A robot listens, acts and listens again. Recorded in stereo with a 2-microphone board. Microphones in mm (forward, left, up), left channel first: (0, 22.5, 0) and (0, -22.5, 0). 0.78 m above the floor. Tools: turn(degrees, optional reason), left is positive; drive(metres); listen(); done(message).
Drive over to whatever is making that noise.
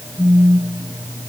turn(degrees=-50, reason="The phone buzzing: about 50° right or 130° right.")
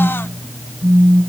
turn(degrees=-80, reason="So it is at 80° right.")
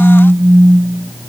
turn(degrees=-40, reason="The phone buzzing is now 40° right.")
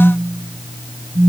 drive(metres=1.0)
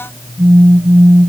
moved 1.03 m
drive(metres=1.0)
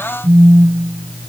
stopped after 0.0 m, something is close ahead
done("I am next to the phone buzzing.")